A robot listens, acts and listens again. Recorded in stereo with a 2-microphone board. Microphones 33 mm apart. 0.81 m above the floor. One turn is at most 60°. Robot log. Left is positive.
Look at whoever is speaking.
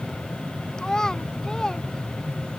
note: The child speaking: about 20° left or 160° left.
cmd yaw +20
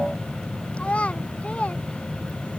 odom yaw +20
note: So it is at 140° left.
cmd yaw +60
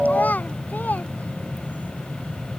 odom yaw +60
note: The child speaking is now 65° left.
cmd yaw +60
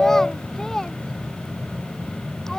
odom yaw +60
note: The child speaking is now 20° left.
cmd yaw +20
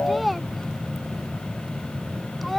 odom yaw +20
end: Found it: a child speaking, straight ahead.